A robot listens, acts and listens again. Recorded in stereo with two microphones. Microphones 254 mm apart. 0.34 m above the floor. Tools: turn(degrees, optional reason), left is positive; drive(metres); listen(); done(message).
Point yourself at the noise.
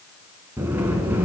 turn(degrees=-30)
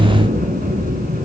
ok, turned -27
turn(degrees=-145, reason="So it is at 145° right.")
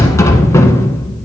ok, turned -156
turn(degrees=10, reason="The sliding door is now 10° left.")
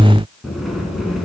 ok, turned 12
done("Facing the sliding door.")